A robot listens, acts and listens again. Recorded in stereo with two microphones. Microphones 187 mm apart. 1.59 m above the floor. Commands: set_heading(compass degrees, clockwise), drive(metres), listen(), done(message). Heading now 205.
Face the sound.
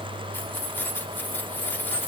set_heading(175)
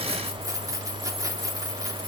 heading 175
set_heading(195)
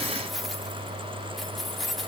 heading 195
done("Found it: keys jangling, straight ahead, 2 to 4 m away.")